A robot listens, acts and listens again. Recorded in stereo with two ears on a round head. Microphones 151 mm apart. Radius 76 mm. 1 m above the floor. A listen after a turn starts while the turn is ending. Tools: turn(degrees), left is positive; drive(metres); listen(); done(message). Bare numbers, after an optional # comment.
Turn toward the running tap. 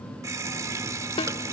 # The running tap: about 20° right or 160° right.
turn(-20)
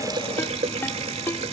# So it is at 140° right.
turn(-140)
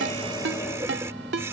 # The running tap is now 15° right.
turn(-15)
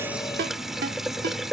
done("Found it: a running tap, straight ahead.")